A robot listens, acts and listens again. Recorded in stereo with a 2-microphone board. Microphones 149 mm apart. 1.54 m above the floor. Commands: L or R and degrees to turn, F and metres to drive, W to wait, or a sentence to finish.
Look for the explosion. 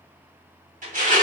W
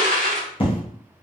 L35
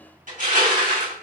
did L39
W
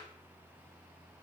I heard an explosion, but can't make it out now. It was about 5° right or 105° left.